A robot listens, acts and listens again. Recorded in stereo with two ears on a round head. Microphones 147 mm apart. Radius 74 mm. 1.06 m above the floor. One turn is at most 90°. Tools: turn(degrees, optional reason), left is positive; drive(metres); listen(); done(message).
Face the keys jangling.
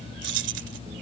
turn(degrees=-90)
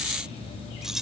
done("Facing the keys jangling.")